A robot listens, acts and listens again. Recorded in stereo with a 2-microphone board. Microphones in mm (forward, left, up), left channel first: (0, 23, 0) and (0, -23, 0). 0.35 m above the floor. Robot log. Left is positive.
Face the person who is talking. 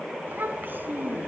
note: The child speaking: about 50° right or 130° right.
cmd yaw -50
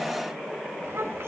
note: So it is at 75° right.
cmd yaw -75
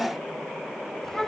note: The child speaking is now 10° left.
cmd yaw +10
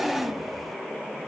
end: Facing the child speaking, 2 to 4 m away.